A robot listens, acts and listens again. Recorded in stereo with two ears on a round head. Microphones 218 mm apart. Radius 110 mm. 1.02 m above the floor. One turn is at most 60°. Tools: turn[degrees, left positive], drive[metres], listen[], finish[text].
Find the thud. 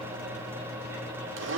Action: listen[]
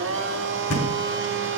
Thought: The thud: about 45° left or 135° left.
Action: turn[45]
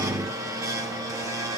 Action: listen[]
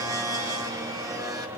Action: finish[I heard a thud, but can't make it out now. It was about straight ahead or 90° left.]